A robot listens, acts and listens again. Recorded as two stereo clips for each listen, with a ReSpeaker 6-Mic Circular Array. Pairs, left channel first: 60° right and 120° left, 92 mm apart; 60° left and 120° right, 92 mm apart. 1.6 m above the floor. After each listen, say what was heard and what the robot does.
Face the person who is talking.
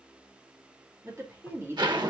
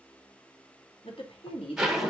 The woman speaking: 55° left. Turn 55° left.
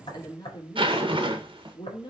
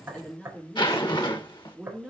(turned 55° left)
The woman speaking is now 35° right. Turn 35° right.
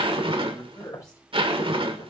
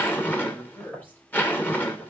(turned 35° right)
The woman speaking is now 10° right. Turn 10° right.
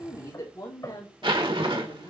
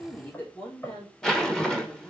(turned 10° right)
Found it: a woman speaking, straight ahead.